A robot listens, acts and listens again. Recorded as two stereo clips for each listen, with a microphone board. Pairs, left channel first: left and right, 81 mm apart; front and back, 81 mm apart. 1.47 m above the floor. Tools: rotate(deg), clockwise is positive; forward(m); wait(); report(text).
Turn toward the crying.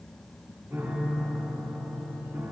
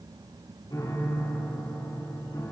wait()
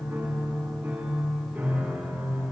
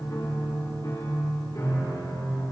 wait()
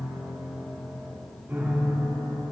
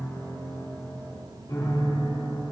report("I can't make out crying to turn to.")